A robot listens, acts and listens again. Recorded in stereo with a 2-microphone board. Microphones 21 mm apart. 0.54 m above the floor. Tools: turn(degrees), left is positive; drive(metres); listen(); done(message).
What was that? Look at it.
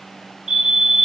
turn(degrees=-60)
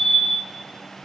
turn(degrees=-15)
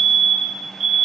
done("Facing the fire alarm, over 4 m away.")